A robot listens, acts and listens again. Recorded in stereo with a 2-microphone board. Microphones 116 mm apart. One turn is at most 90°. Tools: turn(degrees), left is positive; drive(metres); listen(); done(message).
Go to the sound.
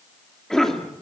turn(degrees=30)
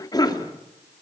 turn(degrees=90)
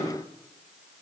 turn(degrees=55)
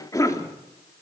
turn(degrees=30)
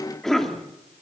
drive(metres=1.0)
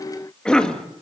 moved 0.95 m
turn(degrees=10)
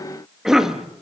drive(metres=1.0)
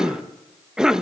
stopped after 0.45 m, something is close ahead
done("Arrived at the cough, straight ahead.")